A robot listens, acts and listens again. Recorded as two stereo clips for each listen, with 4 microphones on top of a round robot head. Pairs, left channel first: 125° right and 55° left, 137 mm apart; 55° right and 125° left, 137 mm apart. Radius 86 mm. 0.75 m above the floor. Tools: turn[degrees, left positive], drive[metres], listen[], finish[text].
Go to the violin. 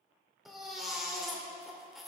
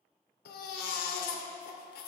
Action: listen[]
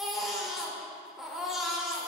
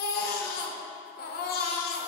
Action: listen[]
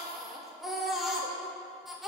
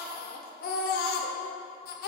Action: finish[I can't make out a violin to turn to.]